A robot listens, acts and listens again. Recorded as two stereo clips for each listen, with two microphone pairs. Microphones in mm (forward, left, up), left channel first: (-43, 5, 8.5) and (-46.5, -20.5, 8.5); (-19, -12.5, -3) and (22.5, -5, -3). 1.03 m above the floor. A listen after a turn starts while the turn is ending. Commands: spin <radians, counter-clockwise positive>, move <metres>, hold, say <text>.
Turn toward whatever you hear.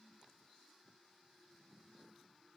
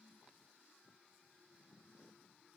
hold
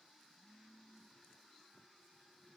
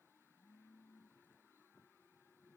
hold
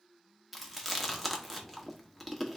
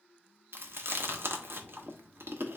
spin -0.17
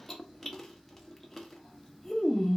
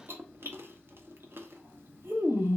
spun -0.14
say Facing the chewing, under 1 m away.